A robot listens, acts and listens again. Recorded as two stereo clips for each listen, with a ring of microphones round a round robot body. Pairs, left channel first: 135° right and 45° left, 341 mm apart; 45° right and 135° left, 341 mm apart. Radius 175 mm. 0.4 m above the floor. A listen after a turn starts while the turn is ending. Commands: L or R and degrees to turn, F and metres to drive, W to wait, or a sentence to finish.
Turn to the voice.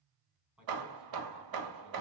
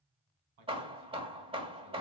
L130
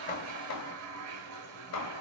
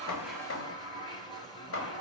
W
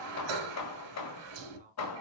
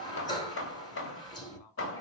R25
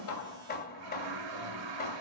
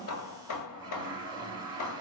W
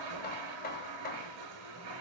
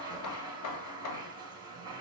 W
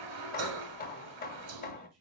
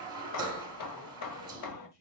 Facing the man speaking, 2 to 4 m away.